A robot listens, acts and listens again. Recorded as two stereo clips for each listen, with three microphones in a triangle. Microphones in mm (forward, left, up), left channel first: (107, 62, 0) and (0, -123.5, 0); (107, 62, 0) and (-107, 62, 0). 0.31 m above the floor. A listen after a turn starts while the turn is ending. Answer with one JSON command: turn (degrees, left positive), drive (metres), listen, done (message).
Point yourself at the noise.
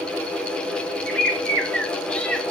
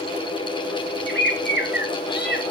{"turn": -25}
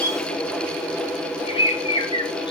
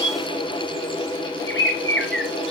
{"done": "Found it: a bird, straight ahead, 1 to 2 m away."}